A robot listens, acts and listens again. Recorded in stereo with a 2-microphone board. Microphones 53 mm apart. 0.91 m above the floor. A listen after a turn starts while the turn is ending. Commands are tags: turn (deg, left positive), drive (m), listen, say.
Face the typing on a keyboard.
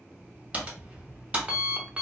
<turn deg="-25"/>
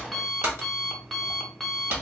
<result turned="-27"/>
<turn deg="-125"/>
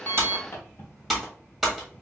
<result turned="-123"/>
<say>Facing the typing on a keyboard, 1 to 2 m away.</say>